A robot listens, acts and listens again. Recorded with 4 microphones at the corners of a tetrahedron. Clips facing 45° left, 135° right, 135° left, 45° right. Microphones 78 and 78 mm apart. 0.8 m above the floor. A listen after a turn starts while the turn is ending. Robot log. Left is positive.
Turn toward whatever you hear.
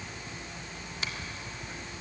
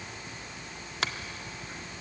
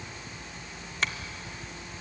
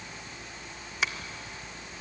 note: The finger snap: 125° right.
cmd yaw -125
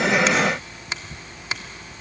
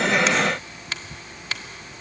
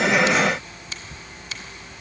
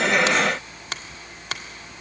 note: The finger snap is now 25° right.
cmd yaw -25
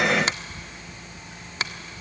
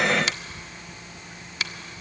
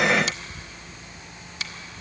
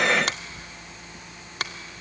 note: The finger snap is now 10° right.
cmd yaw -10
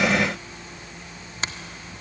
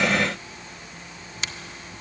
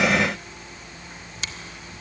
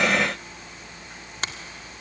cmd idle
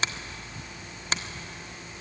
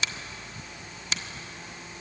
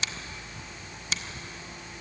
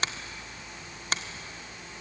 end: Found it: a finger snap, straight ahead.